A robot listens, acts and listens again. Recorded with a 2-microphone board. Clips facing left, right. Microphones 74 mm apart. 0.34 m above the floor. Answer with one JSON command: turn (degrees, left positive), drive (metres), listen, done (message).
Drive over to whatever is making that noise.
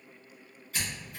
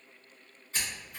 {"turn": -30}
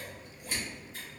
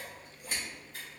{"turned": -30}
{"turn": -120}
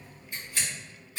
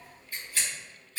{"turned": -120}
{"turn": 20}
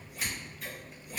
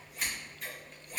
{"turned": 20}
{"drive": 1.0}
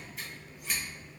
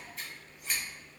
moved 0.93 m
{"drive": 1.0}
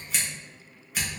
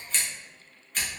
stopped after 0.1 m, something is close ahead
{"turn": 10}
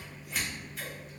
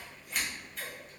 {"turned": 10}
{"done": "I am next to the scissors."}